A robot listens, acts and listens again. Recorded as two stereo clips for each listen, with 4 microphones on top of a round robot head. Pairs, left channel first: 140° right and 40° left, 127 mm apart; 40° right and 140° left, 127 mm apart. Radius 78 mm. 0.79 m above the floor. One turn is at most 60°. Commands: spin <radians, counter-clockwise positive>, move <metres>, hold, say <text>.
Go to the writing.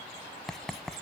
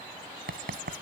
spin 1.05
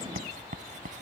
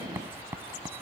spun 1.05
spin 1.05
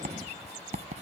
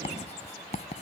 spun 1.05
move 1.0
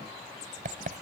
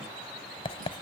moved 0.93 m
spin 0.17
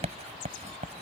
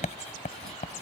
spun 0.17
move 1.0
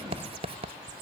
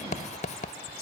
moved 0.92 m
move 1.0
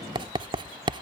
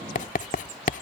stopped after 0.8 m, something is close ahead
spin -0.26
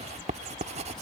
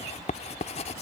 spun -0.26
say I am next to the writing.